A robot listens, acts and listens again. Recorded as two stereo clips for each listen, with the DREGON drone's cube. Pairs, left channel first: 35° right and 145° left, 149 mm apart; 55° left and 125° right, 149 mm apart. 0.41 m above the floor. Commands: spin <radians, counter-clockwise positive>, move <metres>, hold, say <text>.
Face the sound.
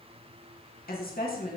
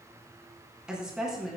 spin -0.61
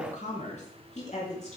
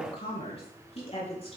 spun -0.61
spin 0.17
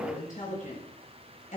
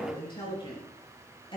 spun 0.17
say Facing the woman speaking, over 4 m away.